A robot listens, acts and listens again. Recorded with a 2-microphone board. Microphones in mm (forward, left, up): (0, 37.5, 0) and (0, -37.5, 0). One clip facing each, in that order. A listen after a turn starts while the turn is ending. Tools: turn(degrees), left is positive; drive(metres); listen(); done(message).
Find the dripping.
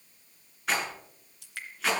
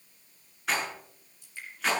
turn(degrees=70)
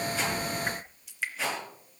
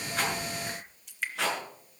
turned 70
done("Facing the dripping.")